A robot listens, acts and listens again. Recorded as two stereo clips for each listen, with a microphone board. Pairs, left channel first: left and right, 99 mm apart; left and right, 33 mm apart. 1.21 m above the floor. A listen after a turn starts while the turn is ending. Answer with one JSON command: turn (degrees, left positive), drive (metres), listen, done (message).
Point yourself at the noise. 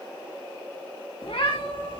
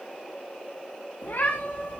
{"turn": 70}
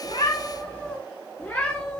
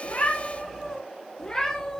{"turn": 10}
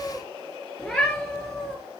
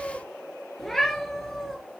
{"done": "Found it: a cat meowing, straight ahead."}